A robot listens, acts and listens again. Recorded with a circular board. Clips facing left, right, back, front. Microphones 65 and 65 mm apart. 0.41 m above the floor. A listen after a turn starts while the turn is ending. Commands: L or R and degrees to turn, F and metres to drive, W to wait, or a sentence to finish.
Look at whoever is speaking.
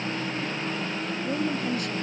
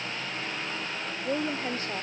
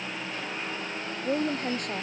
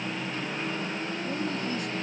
R150
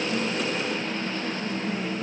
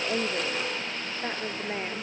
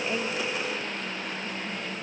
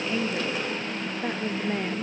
R45
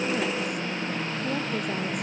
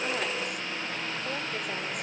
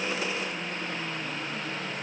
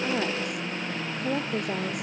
W
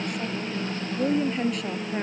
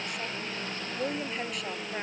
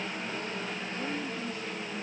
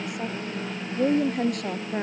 Facing the woman speaking.